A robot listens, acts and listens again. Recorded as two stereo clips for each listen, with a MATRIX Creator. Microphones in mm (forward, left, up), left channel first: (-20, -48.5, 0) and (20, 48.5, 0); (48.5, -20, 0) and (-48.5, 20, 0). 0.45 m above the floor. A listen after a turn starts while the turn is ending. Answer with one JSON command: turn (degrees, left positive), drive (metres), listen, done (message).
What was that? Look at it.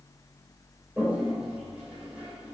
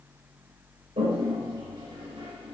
{"turn": 145}
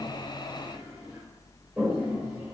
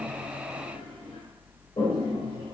{"done": "Found it: a toilet flushing, straight ahead."}